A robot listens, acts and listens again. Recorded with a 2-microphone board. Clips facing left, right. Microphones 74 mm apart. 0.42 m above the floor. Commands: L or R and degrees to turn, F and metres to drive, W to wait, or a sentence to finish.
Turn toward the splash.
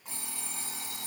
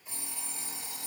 W
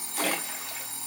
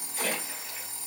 L65
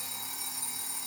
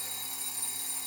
W
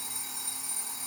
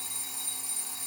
I heard a splash, but can't make it out now. It was about straight ahead or 50° left.